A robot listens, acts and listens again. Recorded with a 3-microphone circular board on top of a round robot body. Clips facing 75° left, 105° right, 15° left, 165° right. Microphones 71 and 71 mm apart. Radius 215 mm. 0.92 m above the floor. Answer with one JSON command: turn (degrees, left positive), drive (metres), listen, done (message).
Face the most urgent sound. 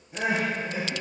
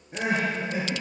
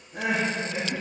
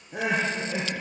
{"turn": -160}
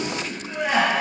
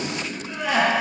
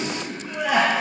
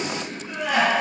{"turn": 15}
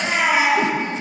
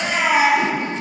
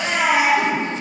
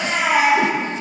{"turn": 10}
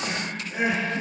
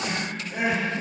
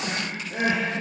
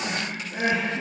{"done": "Found it: crying, straight ahead."}